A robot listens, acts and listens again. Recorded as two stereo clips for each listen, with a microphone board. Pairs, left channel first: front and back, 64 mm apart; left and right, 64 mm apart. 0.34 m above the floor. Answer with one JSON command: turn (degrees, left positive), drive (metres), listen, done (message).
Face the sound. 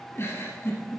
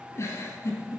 {"turn": 45}
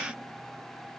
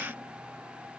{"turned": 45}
{"listen": true}
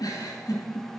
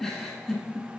{"done": "Found it: a giggle, straight ahead, 1 to 2 m away."}